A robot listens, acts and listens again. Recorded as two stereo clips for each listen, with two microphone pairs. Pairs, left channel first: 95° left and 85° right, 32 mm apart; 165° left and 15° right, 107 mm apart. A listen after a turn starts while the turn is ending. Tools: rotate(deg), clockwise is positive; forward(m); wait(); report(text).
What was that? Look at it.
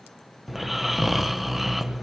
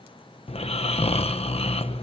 rotate(170)
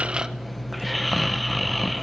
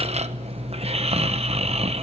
report("Found it: snoring, straight ahead.")